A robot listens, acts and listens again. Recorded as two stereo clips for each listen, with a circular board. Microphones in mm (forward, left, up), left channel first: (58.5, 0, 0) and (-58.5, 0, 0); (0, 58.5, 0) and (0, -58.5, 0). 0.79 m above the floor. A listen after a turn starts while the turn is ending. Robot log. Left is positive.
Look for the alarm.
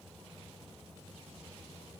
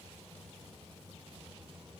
cmd idle
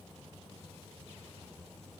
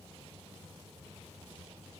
cmd idle
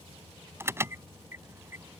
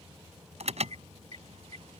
note: The alarm: 110° right.
cmd yaw -110
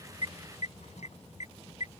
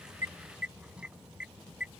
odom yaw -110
note: The alarm is now 10° right.
cmd yaw -10
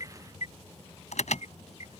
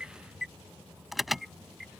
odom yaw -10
end: Found it: an alarm, straight ahead.